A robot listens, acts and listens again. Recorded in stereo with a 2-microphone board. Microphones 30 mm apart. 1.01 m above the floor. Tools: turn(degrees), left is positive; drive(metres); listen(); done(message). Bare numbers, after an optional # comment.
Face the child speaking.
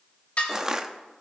listen()
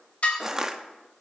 listen()
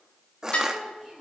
turn(30)
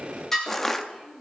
# So it is at 160° left.
turn(160)
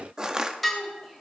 # The child speaking is now 20° right.
turn(-20)
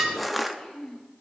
done("Facing the child speaking, 2 to 4 m away.")